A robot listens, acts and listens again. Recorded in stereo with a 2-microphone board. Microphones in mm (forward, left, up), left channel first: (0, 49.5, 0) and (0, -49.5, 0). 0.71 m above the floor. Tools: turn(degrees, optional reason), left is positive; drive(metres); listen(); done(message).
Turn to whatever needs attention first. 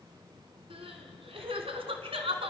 turn(degrees=-75, reason="The crying: about 75° right or 105° right.")
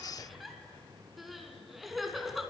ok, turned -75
done("Found it: crying, straight ahead, 2 to 4 m away.")